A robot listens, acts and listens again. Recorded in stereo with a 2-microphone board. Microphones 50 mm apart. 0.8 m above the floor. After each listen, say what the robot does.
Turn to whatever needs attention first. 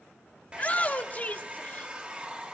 Turn 30° left.
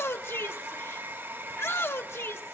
Turn 120° left.
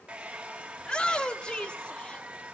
Turn 20° left.
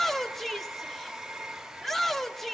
Facing the shout.